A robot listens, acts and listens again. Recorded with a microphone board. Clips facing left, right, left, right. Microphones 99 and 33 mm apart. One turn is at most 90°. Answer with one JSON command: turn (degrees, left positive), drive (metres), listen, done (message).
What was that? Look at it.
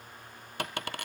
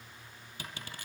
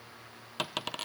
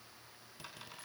{"turn": 70}
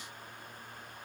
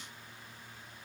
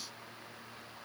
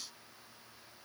{"listen": true}
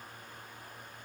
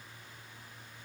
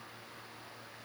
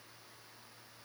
{"done": "I heard a dropped coin, but can't make it out now. It was about straight ahead or 40° left."}